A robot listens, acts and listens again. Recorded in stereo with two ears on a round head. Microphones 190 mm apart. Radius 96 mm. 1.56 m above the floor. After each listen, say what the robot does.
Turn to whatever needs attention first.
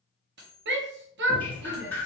Turn 55° right.
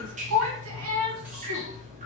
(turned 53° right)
Turn 70° right.
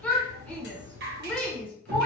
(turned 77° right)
Facing the shout, under 1 m away.